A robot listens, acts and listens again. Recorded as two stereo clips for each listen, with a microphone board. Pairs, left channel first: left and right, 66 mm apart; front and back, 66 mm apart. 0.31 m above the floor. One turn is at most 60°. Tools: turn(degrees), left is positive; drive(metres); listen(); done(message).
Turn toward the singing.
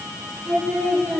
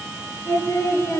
done("Found it: singing, straight ahead, over 4 m away.")